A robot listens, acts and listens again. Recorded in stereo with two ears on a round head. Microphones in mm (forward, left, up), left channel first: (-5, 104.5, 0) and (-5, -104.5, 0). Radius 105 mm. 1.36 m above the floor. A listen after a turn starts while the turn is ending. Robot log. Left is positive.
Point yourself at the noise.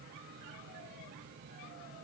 cmd idle
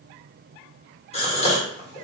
note: The gasp: about 25° left or 155° left.
cmd yaw +25
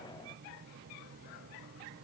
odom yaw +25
cmd idle
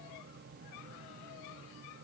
end: I heard a gasp, but can't make it out now. It was about straight ahead or 130° left.